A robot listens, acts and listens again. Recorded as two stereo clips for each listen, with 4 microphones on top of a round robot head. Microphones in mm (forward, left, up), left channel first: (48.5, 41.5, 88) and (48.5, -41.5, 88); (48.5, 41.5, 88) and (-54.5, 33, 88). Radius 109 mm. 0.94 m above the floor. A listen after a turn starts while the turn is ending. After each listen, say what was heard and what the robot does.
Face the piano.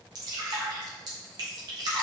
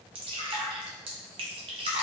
Keep listening.
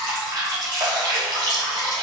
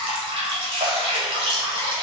Keep listening.
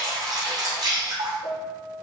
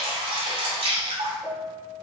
The piano: 115° left. Turn 115° left.
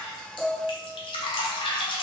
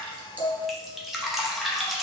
The piano is now 10° right. Turn 10° right.
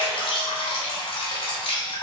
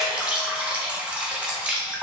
Keep listening.
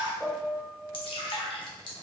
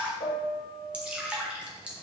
Found it: a piano, straight ahead, 1 to 2 m away.